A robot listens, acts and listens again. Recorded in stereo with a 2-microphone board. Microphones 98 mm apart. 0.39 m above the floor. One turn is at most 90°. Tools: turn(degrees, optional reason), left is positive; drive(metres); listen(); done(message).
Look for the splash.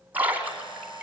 turn(degrees=-15, reason="The splash: about 15° right or 165° right.")
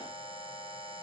listen()
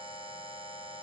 done("I heard a splash, but can't make it out now. It was about straight ahead or 150° right.")